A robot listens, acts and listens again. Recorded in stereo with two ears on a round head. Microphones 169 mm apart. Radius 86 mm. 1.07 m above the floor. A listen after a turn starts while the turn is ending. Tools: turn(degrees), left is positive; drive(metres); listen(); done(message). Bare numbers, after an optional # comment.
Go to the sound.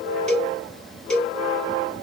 turn(30)
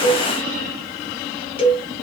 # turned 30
# So it is at 145° left.
turn(145)
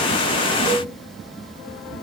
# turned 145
listen()
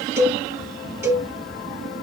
# The cowbell is now 15° right.
turn(-15)
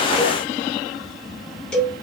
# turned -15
drive(1.0)
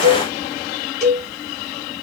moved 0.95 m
drive(1.0)
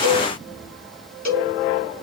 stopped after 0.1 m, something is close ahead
# The cowbell is now 10° left.
turn(10)
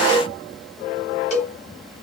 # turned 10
done("I am next to the cowbell.")